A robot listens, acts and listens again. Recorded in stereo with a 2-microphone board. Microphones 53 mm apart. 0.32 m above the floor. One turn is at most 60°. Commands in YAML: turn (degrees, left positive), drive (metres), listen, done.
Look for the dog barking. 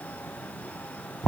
listen: true
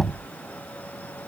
listen: true
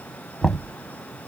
done: "I can't make out a dog barking to turn to."